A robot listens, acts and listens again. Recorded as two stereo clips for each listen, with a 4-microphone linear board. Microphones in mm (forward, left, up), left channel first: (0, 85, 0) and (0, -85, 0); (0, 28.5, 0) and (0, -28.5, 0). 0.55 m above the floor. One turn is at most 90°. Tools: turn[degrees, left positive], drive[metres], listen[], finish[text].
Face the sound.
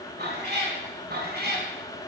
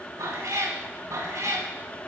Thought: The cat meowing: about 75° right or 105° right.
Action: turn[-75]
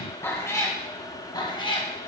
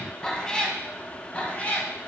Thought: So it is at 30° left.
Action: turn[30]
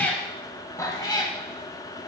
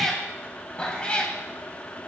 Thought: The cat meowing is now 25° left.
Action: turn[25]
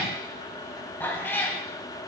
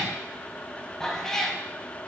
Thought: The cat meowing is now 15° left.
Action: turn[15]
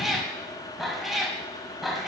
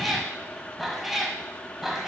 Action: finish[Found it: a cat meowing, straight ahead, 1 to 2 m away.]